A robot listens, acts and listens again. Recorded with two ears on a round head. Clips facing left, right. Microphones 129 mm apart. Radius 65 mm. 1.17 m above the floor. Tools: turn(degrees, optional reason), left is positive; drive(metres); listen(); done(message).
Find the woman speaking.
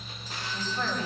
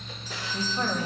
turn(degrees=-15, reason="The woman speaking: about 15° right or 165° right.")
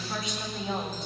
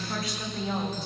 done("Facing the woman speaking, over 4 m away.")